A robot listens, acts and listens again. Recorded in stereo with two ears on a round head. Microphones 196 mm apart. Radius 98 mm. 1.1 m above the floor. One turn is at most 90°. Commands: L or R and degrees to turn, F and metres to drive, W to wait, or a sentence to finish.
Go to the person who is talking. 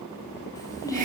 L15
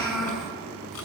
F1.0
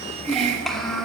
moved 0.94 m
F1.0
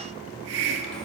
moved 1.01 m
W
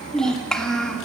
F1.0
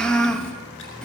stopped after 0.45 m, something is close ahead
I am next to the child speaking.